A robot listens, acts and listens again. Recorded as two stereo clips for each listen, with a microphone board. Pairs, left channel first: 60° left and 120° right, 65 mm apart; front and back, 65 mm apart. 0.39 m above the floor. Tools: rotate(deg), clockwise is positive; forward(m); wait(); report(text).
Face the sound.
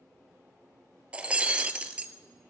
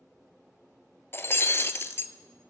rotate(50)
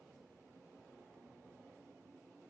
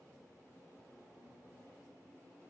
report("I heard breaking glass from this way, but can't make it out now.")